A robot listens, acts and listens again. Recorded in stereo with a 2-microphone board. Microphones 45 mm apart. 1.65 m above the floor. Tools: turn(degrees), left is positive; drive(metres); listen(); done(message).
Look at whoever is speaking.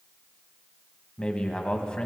turn(degrees=25)
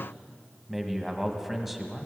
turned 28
done("Found it: a man speaking, straight ahead, 1 to 2 m away.")